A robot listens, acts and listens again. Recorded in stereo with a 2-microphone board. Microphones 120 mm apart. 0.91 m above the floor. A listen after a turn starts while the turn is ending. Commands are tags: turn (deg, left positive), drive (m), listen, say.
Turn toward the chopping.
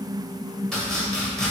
<turn deg="30"/>
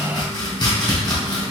<turn deg="145"/>
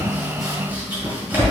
<turn deg="-15"/>
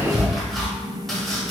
<say>Found it: chopping, straight ahead.</say>